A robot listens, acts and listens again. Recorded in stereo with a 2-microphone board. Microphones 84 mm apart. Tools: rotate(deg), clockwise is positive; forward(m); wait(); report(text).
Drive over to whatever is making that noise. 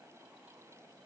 wait()
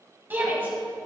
rotate(25)
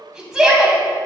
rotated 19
rotate(10)
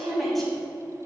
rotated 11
forward(1.0)
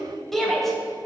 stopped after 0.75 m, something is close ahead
report("I am next to the shout.")